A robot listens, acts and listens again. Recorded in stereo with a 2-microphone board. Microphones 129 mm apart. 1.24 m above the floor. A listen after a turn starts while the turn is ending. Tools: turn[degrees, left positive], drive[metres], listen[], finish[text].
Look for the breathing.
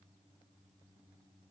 Action: listen[]
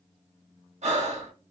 Thought: The breathing: about 60° right or 120° right.
Action: turn[-60]
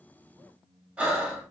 Thought: So it is at 10° right.
Action: turn[-10]
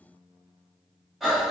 Action: finish[Found it: breathing, straight ahead, 1 to 2 m away.]